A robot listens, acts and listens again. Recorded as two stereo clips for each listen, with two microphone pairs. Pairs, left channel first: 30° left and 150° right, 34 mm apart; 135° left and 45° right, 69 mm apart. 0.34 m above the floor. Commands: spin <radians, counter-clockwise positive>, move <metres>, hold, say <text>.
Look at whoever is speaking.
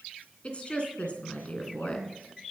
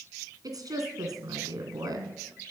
spin -0.44
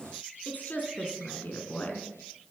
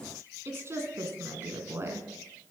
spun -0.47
say Facing the woman speaking.